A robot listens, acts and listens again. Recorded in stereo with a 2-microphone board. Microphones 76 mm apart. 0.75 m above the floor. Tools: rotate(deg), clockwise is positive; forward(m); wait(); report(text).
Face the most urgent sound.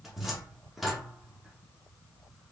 wait()
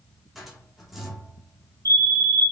rotate(50)
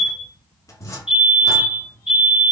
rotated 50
rotate(15)
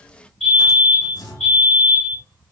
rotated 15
report("Found it: a fire alarm, straight ahead, 2 to 4 m away.")